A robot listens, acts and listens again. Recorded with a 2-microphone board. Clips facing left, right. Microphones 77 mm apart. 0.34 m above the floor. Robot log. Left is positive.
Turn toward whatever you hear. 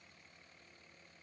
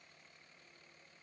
cmd idle
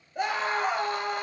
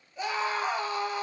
note: The scream: about 55° left or 125° left.
cmd yaw +55
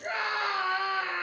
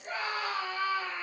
note: So it is at 65° left.
cmd yaw +65
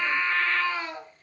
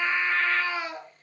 note: The scream is now 10° right.
cmd yaw -10
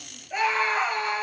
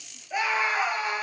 end: Found it: a scream, straight ahead.